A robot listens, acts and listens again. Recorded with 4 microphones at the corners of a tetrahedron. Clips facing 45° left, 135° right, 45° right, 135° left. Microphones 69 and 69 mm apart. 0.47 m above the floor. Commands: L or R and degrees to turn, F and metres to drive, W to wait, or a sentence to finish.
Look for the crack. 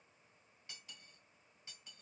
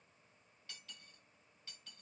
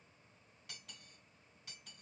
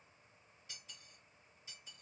W
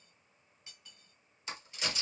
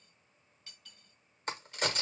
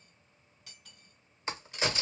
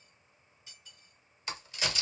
R100
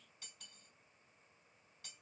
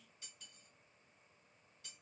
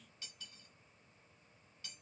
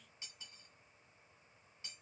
Facing where the crack came from. I can't hear it now.